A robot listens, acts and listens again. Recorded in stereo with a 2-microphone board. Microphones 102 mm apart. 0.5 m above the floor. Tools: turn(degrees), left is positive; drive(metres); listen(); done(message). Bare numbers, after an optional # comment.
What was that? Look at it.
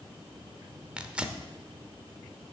turn(-30)
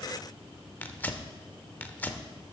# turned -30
# So it is at 20° left.
turn(20)
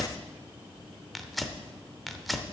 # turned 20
done("Found it: tearing paper, straight ahead.")